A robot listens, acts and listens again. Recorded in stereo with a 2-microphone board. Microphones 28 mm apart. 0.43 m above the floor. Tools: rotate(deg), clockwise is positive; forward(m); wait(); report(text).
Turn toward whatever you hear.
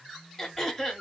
rotate(-30)
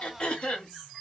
rotate(-140)
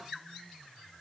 wait()
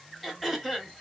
report("Facing the throat clearing.")